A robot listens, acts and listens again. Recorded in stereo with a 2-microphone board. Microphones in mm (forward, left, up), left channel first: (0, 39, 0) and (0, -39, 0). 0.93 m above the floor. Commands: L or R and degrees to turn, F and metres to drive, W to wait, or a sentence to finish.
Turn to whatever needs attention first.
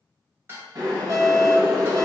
R50
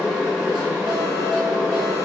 W
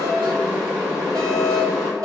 R60
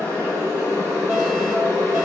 W
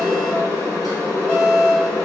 R25
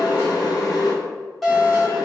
Facing the alarm.